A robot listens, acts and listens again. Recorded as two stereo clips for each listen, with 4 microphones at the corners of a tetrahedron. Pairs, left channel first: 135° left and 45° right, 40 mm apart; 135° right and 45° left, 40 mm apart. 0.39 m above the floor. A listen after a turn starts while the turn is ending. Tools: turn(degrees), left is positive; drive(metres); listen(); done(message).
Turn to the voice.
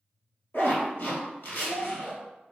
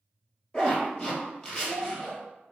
turn(degrees=125)
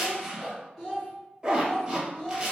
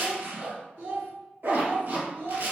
turn(degrees=60)
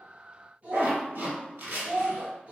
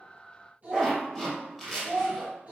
done("Facing the child speaking, 2 to 4 m away.")